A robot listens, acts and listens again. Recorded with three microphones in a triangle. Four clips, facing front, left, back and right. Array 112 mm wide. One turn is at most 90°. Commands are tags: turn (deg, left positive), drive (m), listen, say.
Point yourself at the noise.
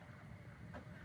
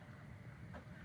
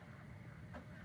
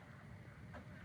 <listen/>
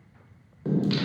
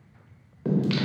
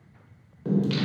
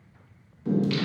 <turn deg="80"/>
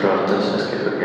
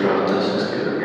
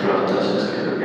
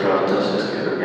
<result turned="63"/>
<turn deg="-20"/>
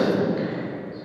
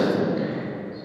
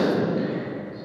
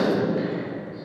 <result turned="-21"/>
<turn deg="-10"/>
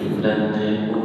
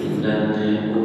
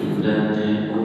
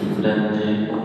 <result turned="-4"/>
<turn deg="-25"/>
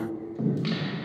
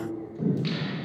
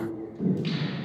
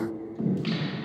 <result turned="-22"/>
<turn deg="-10"/>
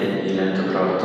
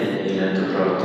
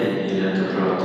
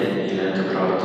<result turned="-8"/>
<say>Facing the singing, 1 to 2 m away.</say>